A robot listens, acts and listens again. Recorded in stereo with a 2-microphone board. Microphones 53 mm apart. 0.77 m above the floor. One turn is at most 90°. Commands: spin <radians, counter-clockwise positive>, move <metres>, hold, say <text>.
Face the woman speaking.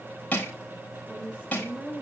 spin -0.44
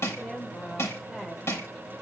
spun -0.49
say Facing the woman speaking.